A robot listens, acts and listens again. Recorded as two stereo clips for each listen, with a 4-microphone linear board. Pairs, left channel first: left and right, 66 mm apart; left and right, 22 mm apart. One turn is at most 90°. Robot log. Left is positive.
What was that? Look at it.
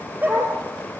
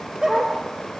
note: The dog barking: about 25° right or 155° right.
cmd yaw -25
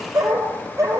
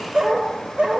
note: So it is at 125° right.
cmd yaw -90
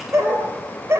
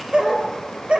note: The dog barking is now 45° right.
cmd yaw -45
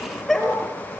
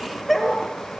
end: Found it: a dog barking, straight ahead, 2 to 4 m away.